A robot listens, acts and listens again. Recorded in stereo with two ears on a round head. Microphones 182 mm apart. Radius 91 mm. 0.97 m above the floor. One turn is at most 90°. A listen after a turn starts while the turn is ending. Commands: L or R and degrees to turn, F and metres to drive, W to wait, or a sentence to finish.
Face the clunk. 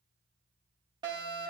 W
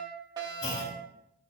L60
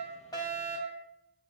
W
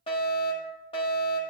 I heard a clunk, but can't make it out now. It was about straight ahead or 60° left.